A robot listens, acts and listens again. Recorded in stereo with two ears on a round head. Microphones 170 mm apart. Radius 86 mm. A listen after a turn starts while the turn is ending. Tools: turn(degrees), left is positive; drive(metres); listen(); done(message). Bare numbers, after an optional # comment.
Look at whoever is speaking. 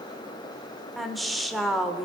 turn(30)
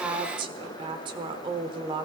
# So it is at 30° right.
turn(-30)
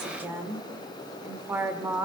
# The woman speaking is now 15° right.
turn(-15)
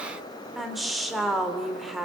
done("Facing the woman speaking, 1 to 2 m away.")